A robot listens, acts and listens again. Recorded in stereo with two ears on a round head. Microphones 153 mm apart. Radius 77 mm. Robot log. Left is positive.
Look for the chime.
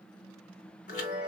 note: The chime: about 50° left or 130° left.
cmd yaw +50
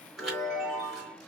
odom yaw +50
end: Facing the chime.